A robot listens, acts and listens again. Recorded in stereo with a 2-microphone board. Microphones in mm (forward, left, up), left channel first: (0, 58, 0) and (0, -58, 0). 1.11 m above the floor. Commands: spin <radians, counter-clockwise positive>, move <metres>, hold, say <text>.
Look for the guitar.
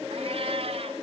hold
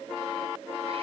hold
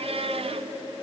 say I can't make out a guitar, only a cat meowing.